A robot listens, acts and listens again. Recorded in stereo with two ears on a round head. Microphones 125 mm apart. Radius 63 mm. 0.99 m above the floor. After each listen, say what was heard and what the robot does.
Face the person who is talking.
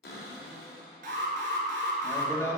The man speaking: about 20° left or 160° left. Turn 20° left.
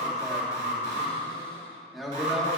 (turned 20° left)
Found it: a man speaking, straight ahead.